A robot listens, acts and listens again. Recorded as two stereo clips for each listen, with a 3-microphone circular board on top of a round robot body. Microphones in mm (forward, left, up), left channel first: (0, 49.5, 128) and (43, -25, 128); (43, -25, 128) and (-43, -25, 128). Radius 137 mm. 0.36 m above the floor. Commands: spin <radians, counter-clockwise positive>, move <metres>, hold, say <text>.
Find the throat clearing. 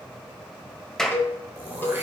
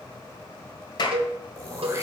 spin -2.27
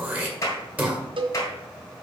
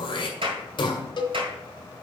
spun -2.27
spin 0.17
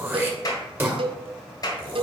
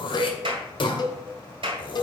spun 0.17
say Facing the throat clearing.